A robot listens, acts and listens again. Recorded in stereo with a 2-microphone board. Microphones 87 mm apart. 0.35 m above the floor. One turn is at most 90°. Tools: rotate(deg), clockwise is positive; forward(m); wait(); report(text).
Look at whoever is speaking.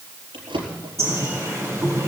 wait()
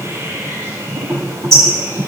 wait()
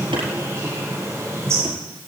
report("I can't make out anyone speaking to turn to.")